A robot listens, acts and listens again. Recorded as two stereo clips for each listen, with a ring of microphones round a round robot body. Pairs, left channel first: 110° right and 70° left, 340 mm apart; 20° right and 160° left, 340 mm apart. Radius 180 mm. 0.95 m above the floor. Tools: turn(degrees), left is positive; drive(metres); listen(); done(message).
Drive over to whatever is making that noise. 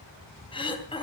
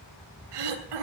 turn(degrees=170)
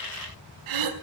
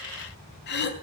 turn(degrees=40)
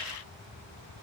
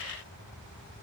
listen()
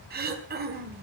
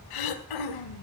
drive(metres=1.0)
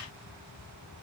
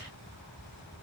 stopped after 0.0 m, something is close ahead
listen()
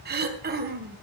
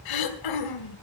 done("Blocked. The throat clearing is further on, straight ahead.")